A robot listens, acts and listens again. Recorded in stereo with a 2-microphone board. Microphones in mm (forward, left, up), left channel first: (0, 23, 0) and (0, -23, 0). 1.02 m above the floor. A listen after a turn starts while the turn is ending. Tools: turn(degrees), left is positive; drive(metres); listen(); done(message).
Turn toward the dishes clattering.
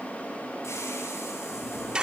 turn(degrees=-30)
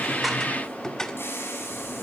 turn(degrees=15)
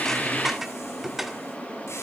done("Facing the dishes clattering.")